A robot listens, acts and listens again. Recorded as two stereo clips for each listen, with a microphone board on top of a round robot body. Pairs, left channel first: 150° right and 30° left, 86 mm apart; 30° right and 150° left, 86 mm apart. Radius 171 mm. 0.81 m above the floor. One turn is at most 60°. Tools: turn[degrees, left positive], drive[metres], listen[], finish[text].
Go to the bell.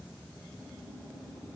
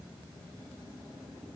Action: listen[]
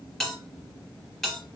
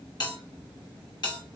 Thought: The bell: 65° right.
Action: turn[-60]
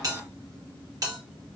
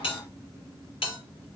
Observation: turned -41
Thought: The bell is now 20° right.
Action: turn[-20]
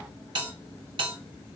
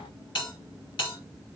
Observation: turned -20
Action: drive[1.0]
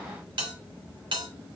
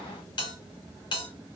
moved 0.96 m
Action: drive[1.0]
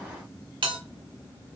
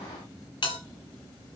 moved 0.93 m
Action: drive[1.0]
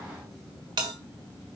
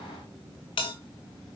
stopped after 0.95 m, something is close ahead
Thought: The bell is now 10° right.
Action: turn[-10]
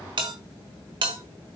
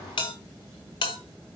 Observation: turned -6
Action: finish[I am next to the bell.]